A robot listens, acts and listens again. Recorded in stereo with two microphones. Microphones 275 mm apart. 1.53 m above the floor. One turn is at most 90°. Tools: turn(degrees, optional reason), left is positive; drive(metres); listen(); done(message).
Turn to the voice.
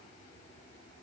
listen()
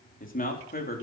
turn(degrees=35, reason="The man speaking: about 35° left or 145° left.")
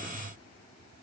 listen()
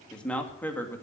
turn(degrees=10, reason="So it is at 10° left.")
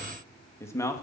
turn(degrees=10, reason="The man speaking is now 10° left.")
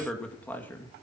turn(degrees=10, reason="The man speaking is now 10° left.")
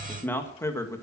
turn(degrees=10, reason="The man speaking is now 10° left.")
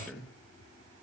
done("Facing the man speaking.")